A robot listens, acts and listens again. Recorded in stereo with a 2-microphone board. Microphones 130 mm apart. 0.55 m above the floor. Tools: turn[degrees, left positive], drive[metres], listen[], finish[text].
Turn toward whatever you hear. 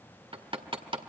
Thought: The hammering: about 45° right or 135° right.
Action: turn[-45]
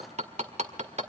Thought: So it is at 80° right.
Action: turn[-80]
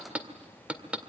Thought: The hammering is now 10° right.
Action: turn[-10]
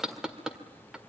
Action: finish[Found it: hammering, straight ahead.]